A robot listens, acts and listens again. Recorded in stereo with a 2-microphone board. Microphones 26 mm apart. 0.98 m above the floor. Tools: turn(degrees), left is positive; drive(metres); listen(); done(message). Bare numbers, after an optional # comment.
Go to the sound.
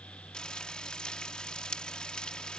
# The frying: about 35° left or 145° left.
turn(35)
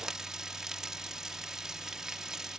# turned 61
# So it is at 25° right.
turn(-25)
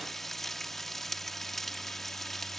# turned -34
# The frying is now 10° left.
turn(10)
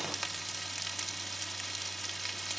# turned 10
drive(1.0)
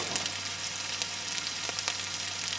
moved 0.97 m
drive(1.0)
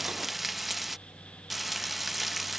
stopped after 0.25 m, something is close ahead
# The frying is now 10° right.
turn(-10)
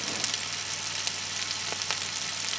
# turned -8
done("I am next to the frying.")